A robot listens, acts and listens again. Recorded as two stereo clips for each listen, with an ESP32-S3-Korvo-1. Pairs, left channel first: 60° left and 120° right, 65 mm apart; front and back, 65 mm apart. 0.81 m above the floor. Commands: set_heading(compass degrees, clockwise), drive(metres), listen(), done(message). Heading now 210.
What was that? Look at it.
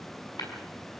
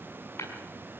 set_heading(155)
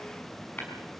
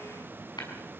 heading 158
done("Found it: tapping, straight ahead.")